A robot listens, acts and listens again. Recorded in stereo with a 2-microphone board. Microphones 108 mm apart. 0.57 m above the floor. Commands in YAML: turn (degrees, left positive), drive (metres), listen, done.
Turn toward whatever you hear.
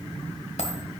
turn: 90
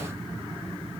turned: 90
done: "Facing where the dropped coin came from. I can't hear it now."